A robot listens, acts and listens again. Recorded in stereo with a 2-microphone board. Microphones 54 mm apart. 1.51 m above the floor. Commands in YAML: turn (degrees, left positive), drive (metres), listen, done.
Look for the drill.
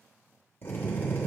turn: 40
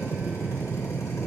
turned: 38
turn: 100
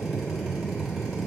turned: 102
done: "Found it: a drill, straight ahead, 2 to 4 m away."